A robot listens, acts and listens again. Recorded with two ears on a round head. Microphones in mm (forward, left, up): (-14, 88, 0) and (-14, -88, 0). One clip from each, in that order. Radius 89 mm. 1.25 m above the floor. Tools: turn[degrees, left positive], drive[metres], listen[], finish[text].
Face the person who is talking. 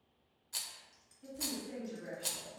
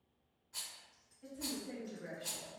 Thought: The woman speaking: about 35° right or 145° right.
Action: turn[-35]
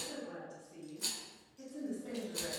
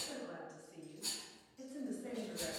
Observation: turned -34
Thought: So it is at 110° right.
Action: turn[-110]
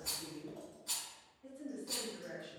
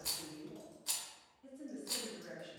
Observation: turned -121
Thought: The woman speaking is now 10° left.
Action: turn[10]
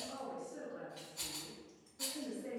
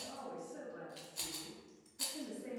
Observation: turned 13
Action: finish[Facing the woman speaking.]